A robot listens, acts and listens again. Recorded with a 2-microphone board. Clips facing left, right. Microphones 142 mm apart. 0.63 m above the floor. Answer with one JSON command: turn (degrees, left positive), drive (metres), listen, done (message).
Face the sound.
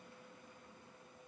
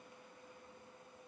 {"listen": true}
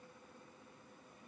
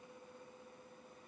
{"listen": true}
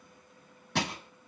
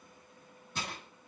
{"turn": 90}
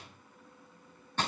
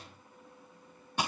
{"turn": -10}
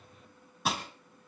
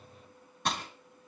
{"done": "Found it: crushing, straight ahead."}